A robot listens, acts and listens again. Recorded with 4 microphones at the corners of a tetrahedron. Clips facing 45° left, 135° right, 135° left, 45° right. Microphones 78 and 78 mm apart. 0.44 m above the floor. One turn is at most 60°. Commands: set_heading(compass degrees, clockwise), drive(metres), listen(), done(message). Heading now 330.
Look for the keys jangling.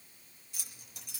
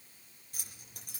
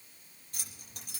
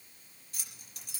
set_heading(270)
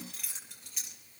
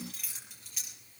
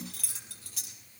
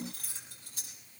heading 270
set_heading(210)
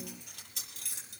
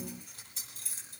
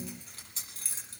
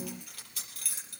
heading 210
set_heading(150)
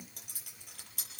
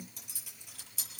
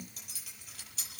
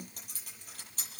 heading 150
set_heading(140)
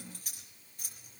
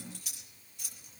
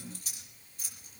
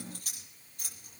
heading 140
done("Facing the keys jangling.")